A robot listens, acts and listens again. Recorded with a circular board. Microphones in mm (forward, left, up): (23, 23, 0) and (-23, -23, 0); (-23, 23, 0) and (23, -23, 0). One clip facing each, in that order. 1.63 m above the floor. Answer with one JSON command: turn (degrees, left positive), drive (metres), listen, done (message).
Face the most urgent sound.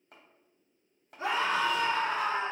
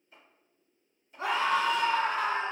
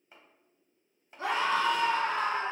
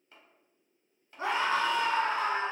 {"turn": -105}
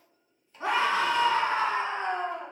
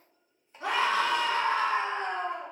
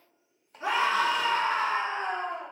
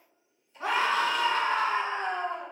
{"turn": -10}
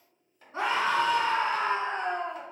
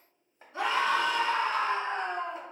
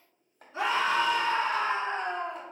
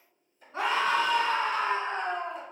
{"done": "Found it: a scream, straight ahead."}